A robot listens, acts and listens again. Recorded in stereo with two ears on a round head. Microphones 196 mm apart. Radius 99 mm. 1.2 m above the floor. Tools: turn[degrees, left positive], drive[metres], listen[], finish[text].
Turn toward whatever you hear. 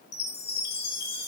Thought: The chime: about 55° left or 125° left.
Action: turn[55]
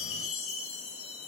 Thought: So it is at 70° left.
Action: turn[70]
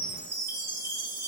Thought: The chime is now 15° right.
Action: turn[-15]
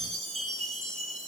Action: finish[Found it: a chime, straight ahead.]